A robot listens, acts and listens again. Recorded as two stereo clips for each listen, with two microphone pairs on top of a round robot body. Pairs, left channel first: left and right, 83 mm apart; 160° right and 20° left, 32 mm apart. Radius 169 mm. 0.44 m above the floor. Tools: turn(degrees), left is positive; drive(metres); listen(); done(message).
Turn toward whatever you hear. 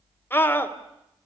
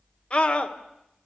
turn(degrees=150)
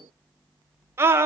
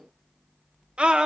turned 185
turn(degrees=-35)
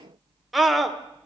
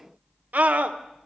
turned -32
done("Found it: a scream, straight ahead.")